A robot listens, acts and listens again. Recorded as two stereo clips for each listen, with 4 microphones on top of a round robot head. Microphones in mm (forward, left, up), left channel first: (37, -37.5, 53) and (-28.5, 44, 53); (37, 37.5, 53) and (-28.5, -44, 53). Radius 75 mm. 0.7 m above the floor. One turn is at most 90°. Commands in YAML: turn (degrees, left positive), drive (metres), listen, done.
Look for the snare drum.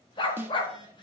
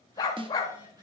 turn: -90
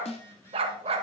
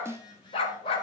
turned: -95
turn: -65
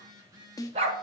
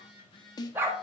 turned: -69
done: "Found it: a snare drum, straight ahead, under 1 m away."